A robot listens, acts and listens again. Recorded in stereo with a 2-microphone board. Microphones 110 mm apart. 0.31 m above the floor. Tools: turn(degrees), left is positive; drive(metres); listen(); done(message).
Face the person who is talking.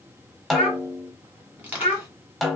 turn(degrees=70)
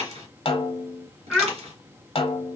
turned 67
turn(degrees=10)
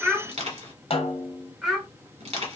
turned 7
done("Found it: a child speaking, straight ahead, 1 to 2 m away.")